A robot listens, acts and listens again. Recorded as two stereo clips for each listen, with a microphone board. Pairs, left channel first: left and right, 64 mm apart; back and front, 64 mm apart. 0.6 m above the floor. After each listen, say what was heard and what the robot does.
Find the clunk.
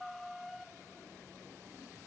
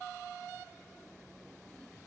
Keep listening.
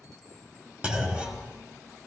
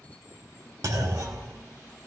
The clunk: 20° right. Turn 20° right.
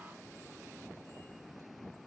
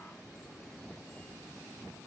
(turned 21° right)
I heard a clunk from this way, but can't make it out now.